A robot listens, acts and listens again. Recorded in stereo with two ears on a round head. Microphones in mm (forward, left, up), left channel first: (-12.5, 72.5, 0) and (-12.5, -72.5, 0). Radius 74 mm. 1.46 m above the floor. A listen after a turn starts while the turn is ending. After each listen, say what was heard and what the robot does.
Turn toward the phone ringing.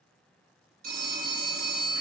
The phone ringing: about 55° right or 125° right. Turn 55° right.
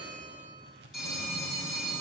Found it: a phone ringing, straight ahead.